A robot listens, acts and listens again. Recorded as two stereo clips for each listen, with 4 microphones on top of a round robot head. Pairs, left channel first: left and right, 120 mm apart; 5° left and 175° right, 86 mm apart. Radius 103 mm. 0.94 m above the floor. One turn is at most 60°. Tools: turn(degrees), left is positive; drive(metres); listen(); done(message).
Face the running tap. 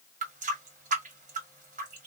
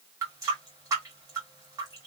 turn(degrees=-60)
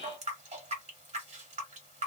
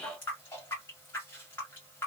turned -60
turn(degrees=-60)
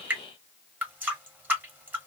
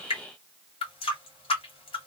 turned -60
turn(degrees=-15)
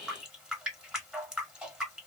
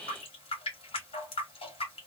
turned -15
done("Found it: a running tap, straight ahead.")